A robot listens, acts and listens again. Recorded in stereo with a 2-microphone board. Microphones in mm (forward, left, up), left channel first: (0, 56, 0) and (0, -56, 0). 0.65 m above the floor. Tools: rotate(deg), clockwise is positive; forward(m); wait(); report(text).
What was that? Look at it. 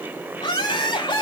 rotate(-50)
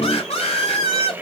rotate(-65)
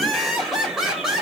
report("Found it: laughter, straight ahead.")